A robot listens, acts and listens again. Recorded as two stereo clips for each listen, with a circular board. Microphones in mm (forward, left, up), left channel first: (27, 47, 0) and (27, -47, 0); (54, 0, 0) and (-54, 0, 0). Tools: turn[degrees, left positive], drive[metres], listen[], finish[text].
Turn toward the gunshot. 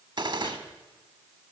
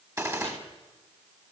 Thought: The gunshot: 120° right.
Action: turn[-120]
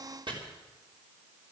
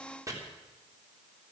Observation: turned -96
Thought: Nothing new. It was at 25° right.
Action: turn[-25]
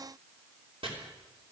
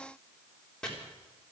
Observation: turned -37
Thought: Nothing new. It was at 15° left.
Action: turn[15]
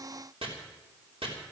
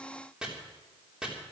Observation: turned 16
Action: finish[Facing where the gunshot came from. I can't hear it now.]